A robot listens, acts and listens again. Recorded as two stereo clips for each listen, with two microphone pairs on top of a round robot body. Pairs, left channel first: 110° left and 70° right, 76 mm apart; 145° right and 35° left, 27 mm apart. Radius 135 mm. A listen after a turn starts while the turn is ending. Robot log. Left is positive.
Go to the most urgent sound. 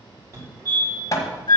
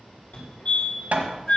note: The fire alarm: 115° right.
cmd yaw -115
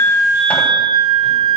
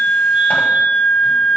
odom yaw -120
cmd idle
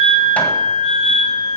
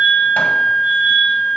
cmd idle
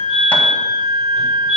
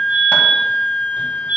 cmd fwd 1.0
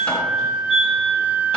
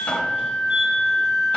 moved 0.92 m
cmd idle
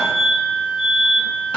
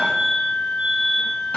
note: The fire alarm is now 15° left.
cmd yaw +15
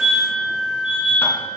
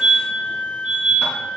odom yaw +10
cmd fwd 1.0
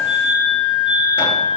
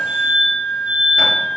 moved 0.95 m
cmd fwd 1.0
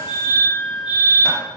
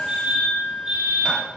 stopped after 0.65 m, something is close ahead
end: Arrived at the fire alarm, straight ahead.